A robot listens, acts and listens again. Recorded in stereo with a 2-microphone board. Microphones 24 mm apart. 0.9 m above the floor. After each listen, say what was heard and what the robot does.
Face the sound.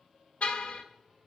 The car horn: about 65° left or 115° left. Turn 65° left.
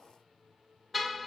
Found it: a car horn, straight ahead, 2 to 4 m away.